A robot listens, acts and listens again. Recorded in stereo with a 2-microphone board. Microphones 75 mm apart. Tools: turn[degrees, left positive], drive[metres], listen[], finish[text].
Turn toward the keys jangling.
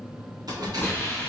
Thought: The keys jangling: about 65° right or 115° right.
Action: turn[-65]
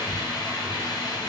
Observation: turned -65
Thought: So it is at 25° right.
Action: turn[-25]
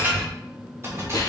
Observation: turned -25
Thought: The keys jangling is now 40° right.
Action: turn[-40]
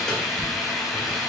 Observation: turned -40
Action: listen[]
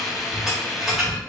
Action: finish[Found it: keys jangling, straight ahead, 1 to 2 m away.]